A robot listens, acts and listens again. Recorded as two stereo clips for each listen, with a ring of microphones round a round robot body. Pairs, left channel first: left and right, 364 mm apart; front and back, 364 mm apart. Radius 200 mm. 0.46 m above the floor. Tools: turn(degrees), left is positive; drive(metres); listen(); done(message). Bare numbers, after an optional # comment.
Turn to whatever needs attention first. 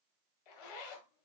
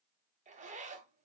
listen()
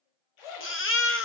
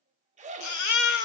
# The baby crying: 35° left.
turn(35)
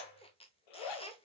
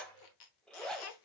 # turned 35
listen()
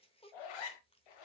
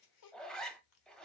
listen()
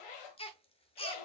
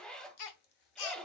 # The baby crying is now 15° left.
turn(15)
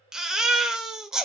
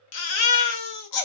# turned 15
done("Found it: a baby crying, straight ahead, 1 to 2 m away.")